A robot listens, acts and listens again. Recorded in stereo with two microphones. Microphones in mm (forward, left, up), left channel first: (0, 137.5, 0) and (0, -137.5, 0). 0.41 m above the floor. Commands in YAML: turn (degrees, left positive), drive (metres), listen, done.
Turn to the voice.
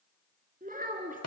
turn: -30
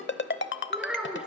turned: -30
done: "Found it: a child speaking, straight ahead, 2 to 4 m away."